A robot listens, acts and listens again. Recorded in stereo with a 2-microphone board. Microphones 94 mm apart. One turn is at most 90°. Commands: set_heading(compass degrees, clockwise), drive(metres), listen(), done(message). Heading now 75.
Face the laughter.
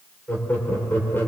set_heading(50)
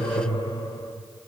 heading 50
set_heading(320)
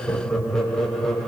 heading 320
done("Facing the laughter.")